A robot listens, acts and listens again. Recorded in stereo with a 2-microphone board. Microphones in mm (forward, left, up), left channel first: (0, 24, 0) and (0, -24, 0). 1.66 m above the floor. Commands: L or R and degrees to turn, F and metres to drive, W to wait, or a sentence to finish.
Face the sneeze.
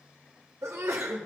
R90
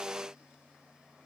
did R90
Facing where the sneeze came from. I can't hear it now.